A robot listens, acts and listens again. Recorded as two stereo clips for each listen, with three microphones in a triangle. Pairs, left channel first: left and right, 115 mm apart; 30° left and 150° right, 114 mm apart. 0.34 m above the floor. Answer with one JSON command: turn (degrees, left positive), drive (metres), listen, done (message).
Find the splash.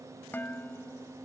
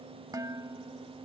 {"listen": true}
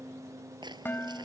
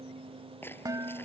{"turn": -40}
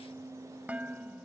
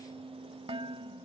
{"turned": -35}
{"done": "I heard a splash from this way, but can't make it out now."}